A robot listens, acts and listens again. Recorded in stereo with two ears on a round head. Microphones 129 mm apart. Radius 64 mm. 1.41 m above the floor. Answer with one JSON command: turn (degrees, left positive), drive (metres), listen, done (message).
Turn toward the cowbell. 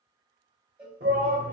{"turn": -30}
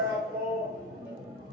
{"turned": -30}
{"listen": true}
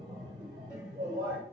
{"listen": true}
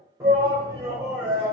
{"done": "I heard a cowbell, but can't make it out now. It was about 20° left or 140° right."}